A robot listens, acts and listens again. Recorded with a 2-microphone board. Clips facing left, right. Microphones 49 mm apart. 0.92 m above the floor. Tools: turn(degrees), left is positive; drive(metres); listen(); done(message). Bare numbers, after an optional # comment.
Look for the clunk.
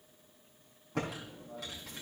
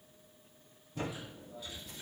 listen()
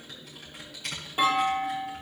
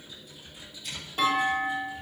turn(30)
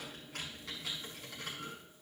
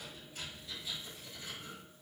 listen()
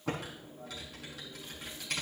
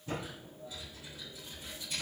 done("I heard a clunk, but can't make it out now. It was about 15° right or 135° left.")